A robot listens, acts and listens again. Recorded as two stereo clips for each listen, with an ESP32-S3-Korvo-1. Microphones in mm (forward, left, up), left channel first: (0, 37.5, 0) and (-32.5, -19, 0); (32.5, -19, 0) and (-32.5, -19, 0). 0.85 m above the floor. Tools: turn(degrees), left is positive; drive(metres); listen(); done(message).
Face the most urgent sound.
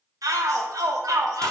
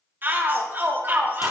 turn(degrees=-125)
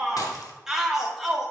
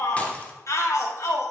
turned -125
turn(degrees=-35)
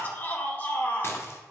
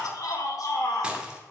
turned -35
done("Facing the shout, 1 to 2 m away.")